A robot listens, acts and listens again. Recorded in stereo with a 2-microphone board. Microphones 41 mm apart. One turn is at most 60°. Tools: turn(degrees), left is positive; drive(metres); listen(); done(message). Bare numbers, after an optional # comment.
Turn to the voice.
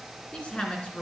# The woman speaking: about 30° left or 150° left.
turn(30)
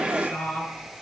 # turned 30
# So it is at 115° left.
turn(60)
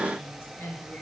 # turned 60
# The woman speaking is now 70° left.
turn(60)
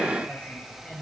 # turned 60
# The woman speaking is now 25° left.
turn(25)
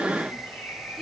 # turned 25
listen()
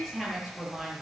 done("Facing the woman speaking, over 4 m away.")